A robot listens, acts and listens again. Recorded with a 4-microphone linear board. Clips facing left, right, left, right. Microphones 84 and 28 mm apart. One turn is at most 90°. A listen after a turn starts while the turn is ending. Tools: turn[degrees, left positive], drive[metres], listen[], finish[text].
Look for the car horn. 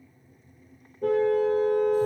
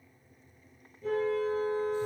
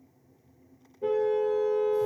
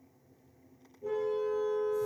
Thought: The car horn: about 70° left or 110° left.
Action: turn[70]
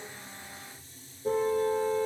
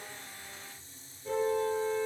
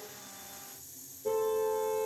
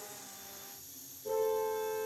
Thought: So it is at 40° left.
Action: turn[40]
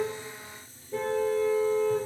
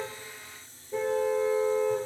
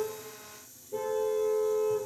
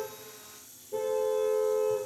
Thought: The car horn is now 10° right.
Action: turn[-10]
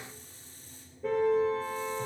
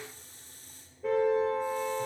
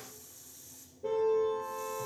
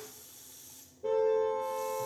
Action: finish[Found it: a car horn, straight ahead, 2 to 4 m away.]